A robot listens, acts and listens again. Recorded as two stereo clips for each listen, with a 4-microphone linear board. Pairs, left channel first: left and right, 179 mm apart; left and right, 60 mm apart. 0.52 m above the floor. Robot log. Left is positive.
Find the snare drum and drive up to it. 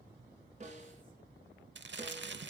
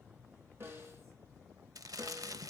note: The snare drum: about 40° right or 140° right.
cmd yaw -40
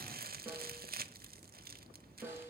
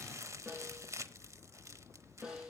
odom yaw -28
note: So it is at 10° right.
cmd yaw -10
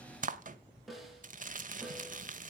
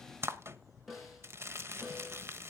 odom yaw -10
cmd fwd 1.0
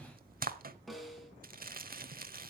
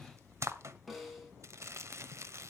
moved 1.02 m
cmd fwd 1.0
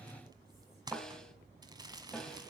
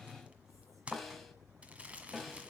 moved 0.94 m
cmd fwd 1.0
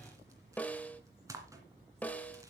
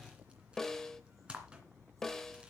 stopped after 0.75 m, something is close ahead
note: The snare drum is now 10° left.
cmd yaw +10
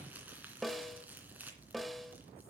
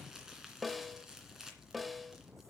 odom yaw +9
end: I am next to the snare drum.